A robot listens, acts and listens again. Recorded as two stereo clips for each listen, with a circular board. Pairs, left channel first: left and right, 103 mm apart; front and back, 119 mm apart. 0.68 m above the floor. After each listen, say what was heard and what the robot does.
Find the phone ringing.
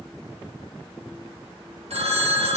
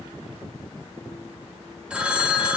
The phone ringing: 100° right. Turn 100° right.
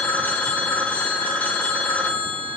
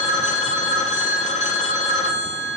The phone ringing is now 15° left. Turn 15° left.
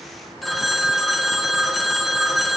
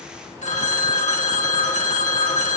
Found it: a phone ringing, straight ahead, 1 to 2 m away.